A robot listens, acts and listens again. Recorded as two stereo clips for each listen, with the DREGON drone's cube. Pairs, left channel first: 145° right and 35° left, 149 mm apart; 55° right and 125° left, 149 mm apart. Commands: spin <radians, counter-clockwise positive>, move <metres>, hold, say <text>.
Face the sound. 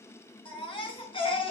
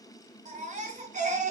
spin 2.79
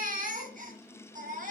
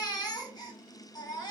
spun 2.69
say Facing the baby crying.